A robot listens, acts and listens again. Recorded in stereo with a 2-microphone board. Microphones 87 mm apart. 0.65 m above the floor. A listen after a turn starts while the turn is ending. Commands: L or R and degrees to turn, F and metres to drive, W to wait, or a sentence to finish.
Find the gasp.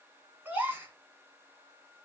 R20
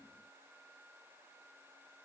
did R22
W
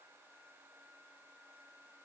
I heard a gasp, but can't make it out now. It was about straight ahead or 140° right.